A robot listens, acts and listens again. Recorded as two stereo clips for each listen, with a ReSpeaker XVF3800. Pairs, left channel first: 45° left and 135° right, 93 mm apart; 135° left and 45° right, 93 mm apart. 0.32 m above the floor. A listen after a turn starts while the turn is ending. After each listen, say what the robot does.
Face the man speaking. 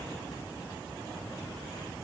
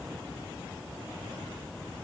Keep listening.
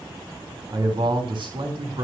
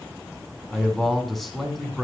Turn 135° right.
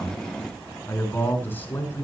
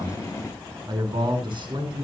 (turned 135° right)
Turn 20° right.
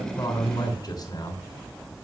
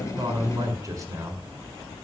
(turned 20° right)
Facing the man speaking.